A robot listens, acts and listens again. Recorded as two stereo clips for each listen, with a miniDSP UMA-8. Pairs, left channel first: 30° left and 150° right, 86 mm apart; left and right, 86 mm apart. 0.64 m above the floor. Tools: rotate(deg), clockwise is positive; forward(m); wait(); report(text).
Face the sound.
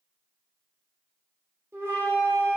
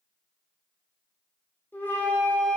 rotate(-155)
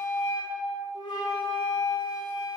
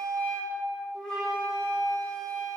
rotate(-10)
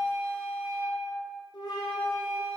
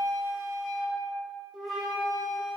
report("Found it: a flute, straight ahead.")